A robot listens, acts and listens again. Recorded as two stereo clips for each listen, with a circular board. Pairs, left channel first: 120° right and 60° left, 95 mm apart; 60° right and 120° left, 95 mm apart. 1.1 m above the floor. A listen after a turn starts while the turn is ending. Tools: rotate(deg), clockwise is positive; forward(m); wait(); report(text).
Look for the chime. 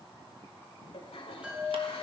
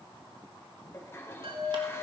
rotate(-135)
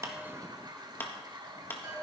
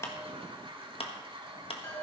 report("Facing the chime.")